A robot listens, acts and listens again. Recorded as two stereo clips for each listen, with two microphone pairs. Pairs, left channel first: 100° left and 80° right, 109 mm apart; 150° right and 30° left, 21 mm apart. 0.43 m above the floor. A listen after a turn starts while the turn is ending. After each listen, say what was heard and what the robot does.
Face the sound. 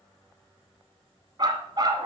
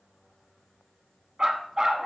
The dog barking: 25° right. Turn 25° right.
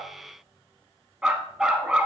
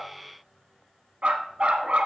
Facing the dog barking.